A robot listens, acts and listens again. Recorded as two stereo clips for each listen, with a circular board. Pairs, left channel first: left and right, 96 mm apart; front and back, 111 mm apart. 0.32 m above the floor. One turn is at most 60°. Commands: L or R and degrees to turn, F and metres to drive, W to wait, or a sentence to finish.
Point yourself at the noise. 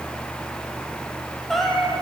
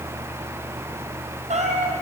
L60
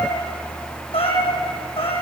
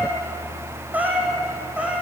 L60
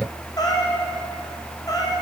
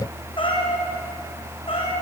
L35
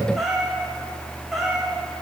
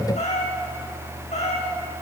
Found it: a cat meowing, straight ahead.